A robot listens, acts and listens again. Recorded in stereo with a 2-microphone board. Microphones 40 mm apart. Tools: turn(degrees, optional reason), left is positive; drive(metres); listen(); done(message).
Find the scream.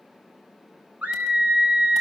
turn(degrees=-45, reason="The scream: about 45° right or 135° right.")
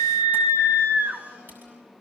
turn(degrees=-90, reason="So it is at 90° right.")
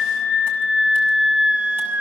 turn(degrees=-30, reason="The scream is now 30° right.")
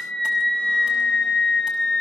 turn(degrees=20, reason="The scream is now 20° left.")
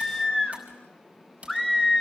done("Facing the scream, 2 to 4 m away.")